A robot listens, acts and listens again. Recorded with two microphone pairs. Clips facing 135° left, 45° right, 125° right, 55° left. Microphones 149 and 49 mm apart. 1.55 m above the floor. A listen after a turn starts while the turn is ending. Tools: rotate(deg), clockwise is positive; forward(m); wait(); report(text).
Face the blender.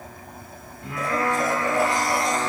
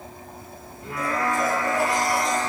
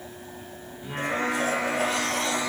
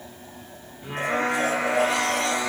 rotate(-70)
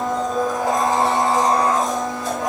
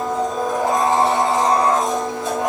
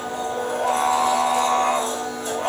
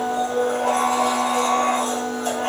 rotate(-20)
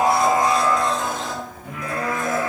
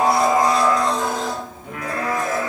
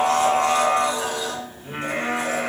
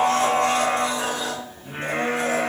report("Found it: a blender, straight ahead.")